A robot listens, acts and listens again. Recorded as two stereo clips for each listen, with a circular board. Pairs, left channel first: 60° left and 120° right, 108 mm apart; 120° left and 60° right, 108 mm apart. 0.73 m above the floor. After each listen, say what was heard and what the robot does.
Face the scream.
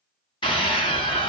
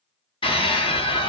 The scream: 90° left. Turn 90° left.
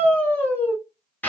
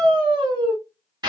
The scream is now 15° right. Turn 15° right.
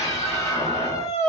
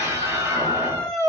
Found it: a scream, straight ahead.